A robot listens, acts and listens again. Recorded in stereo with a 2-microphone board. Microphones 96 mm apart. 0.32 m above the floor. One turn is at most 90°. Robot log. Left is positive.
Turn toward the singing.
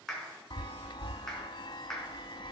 cmd idle
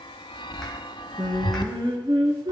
note: The singing: about 50° right or 130° right.
cmd yaw -50
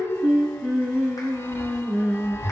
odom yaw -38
note: So it is at 15° right.
cmd yaw -15
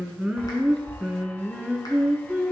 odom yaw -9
end: Found it: singing, straight ahead, 2 to 4 m away.